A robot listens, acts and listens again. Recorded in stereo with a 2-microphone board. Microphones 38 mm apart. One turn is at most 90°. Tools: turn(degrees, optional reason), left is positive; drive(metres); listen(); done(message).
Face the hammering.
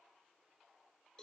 listen()
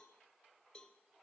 listen()
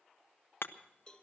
turn(degrees=70, reason="The hammering: about 70° left or 110° left.")
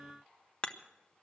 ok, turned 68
turn(degrees=30, reason="So it is at 30° left.")
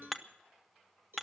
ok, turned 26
done("Found it: hammering, straight ahead, under 1 m away.")